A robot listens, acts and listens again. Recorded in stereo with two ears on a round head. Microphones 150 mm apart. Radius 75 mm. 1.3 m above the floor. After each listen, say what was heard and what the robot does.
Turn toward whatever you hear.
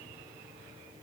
Keep listening.
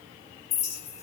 The clink: about 40° left or 140° left. Turn 40° left.
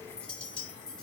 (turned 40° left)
Found it: a clink, straight ahead.